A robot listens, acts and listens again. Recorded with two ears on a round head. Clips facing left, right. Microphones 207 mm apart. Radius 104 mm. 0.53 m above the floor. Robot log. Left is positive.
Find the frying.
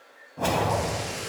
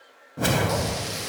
cmd yaw -90
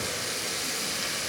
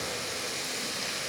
note: So it is at 15° left.
cmd yaw +15
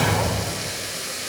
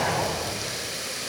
end: Found it: frying, straight ahead, over 4 m away.